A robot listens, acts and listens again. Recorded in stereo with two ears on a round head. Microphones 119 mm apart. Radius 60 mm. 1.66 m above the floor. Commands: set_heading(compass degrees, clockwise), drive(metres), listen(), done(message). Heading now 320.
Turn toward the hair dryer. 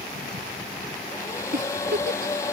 set_heading(300)
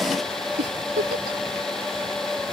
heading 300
done("Facing the hair dryer.")